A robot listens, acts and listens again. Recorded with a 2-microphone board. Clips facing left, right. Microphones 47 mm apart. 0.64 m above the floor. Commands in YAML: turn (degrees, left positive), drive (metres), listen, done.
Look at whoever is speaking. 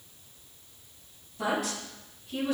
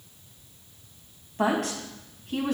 turn: -60
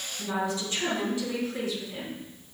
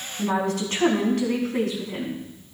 turn: -65
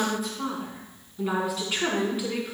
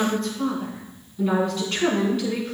turn: 10
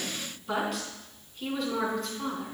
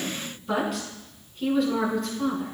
done: "Facing the woman speaking."